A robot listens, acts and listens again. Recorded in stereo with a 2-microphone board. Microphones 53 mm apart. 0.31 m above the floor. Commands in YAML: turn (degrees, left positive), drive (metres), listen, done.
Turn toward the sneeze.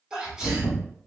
turn: -30
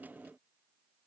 listen: true
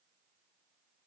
done: "I heard a sneeze, but can't make it out now. It was about 15° left or 135° right."